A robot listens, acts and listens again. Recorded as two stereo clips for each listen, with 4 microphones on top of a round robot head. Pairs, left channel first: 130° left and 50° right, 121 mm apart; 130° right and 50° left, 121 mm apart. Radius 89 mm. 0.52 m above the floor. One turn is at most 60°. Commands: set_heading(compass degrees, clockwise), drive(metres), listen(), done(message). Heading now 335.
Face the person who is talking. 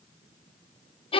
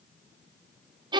listen()
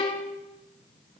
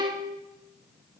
listen()
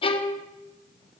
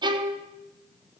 done("I can't make out anyone speaking, only a violin.")